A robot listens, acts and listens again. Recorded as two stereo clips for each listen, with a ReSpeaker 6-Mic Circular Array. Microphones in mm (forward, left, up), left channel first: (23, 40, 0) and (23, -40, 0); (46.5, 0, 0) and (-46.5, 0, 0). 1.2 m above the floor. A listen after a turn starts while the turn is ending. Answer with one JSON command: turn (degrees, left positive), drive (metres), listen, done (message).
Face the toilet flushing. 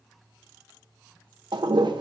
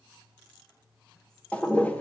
{"turn": -75}
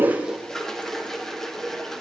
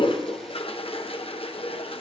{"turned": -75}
{"done": "Found it: a toilet flushing, straight ahead."}